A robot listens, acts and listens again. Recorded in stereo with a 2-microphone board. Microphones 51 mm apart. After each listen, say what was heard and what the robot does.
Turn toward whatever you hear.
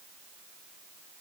Keep listening.
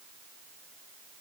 Keep listening.
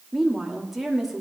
Turn 30° right.
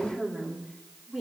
Facing the woman speaking.